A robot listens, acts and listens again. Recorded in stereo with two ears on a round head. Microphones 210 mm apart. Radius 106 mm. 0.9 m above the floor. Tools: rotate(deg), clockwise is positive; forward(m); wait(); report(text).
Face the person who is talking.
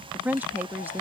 rotate(30)
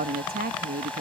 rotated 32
rotate(140)
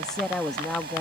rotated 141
report("Facing the woman speaking.")